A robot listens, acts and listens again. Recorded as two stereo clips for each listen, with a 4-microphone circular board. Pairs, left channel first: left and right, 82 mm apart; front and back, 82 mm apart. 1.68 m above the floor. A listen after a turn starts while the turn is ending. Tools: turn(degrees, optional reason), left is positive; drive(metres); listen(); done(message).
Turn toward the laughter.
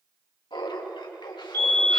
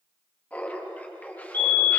turn(degrees=70, reason="The laughter: 70° left.")
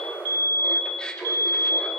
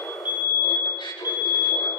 turn(degrees=10, reason="The laughter is now 10° left.")
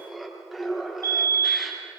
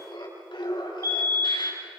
done("Found it: laughter, straight ahead, over 4 m away.")